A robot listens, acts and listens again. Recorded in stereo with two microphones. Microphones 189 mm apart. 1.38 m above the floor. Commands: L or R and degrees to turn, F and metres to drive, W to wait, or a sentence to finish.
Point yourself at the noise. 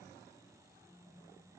W
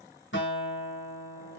L90
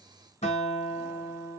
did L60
L35
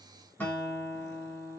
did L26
L10
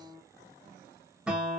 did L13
Found it: a guitar, straight ahead.